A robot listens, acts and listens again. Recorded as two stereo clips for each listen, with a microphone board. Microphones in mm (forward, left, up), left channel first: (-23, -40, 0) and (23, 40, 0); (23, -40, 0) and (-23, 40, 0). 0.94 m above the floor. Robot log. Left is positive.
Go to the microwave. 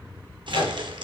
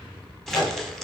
note: The microwave: 110° right.
cmd yaw -110
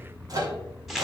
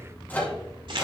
note: The microwave is now 10° left.
cmd yaw +10
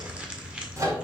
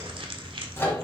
cmd fwd 1.0
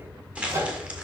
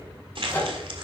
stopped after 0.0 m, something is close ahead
end: Something is in my way. I am facing the microwave but have not reached it.